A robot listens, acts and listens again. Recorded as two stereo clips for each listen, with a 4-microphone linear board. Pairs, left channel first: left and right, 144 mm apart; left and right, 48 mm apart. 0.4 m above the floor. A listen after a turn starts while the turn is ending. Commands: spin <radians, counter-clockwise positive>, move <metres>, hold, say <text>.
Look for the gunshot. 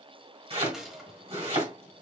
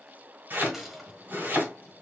spin -0.52
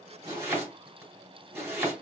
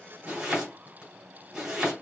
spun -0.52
hold
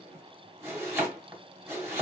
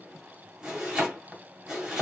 say I heard a gunshot, but can't make it out now. It was about 25° left or 145° right.